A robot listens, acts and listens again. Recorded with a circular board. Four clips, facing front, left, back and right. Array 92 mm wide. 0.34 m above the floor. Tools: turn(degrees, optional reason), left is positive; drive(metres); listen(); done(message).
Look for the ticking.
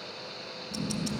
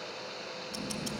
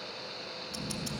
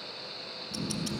turn(degrees=-55, reason="The ticking: 55° right.")
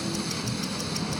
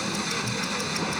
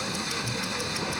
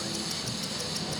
turn(degrees=25, reason="The ticking is now 25° left.")
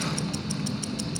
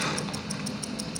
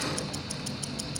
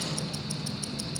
done("Found it: ticking, straight ahead, 1 to 2 m away.")